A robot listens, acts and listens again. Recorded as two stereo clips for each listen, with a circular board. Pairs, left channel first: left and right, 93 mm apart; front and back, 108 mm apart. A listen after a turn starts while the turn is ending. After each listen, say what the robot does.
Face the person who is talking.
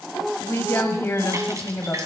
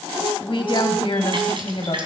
Turn 25° left.
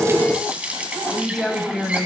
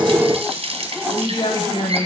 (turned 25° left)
Facing the woman speaking, 2 to 4 m away.